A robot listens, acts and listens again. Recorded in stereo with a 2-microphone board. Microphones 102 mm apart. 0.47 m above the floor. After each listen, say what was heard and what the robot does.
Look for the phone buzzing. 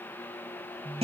The phone buzzing: about 60° right or 120° right. Turn 60° right.
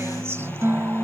Keep listening.
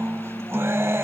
Keep listening.
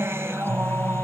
I heard a phone buzzing, but can't make it out now. It was about straight ahead or 60° right.